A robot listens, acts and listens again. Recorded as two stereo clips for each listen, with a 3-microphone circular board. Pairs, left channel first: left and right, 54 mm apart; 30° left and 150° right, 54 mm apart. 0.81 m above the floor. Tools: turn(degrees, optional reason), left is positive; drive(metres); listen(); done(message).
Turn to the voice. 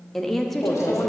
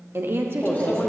turn(degrees=175, reason="The woman speaking: 175° left.")
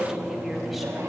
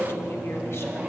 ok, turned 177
listen()
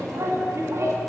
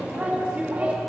listen()
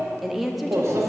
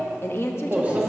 done("Found it: a woman speaking, straight ahead, under 1 m away.")